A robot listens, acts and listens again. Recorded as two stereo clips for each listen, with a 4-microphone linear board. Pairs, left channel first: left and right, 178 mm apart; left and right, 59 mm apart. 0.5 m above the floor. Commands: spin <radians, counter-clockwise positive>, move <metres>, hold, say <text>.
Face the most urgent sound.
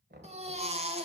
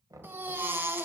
spin -0.61
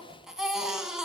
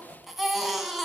say Found it: a baby crying, straight ahead, 1 to 2 m away.